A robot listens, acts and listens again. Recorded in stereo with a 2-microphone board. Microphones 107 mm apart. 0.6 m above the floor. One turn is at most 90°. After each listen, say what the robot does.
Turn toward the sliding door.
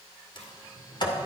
Turn 45° left.
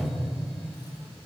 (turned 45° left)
Turn 10° left.
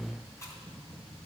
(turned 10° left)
Keep listening.
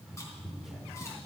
Found it: a sliding door, straight ahead.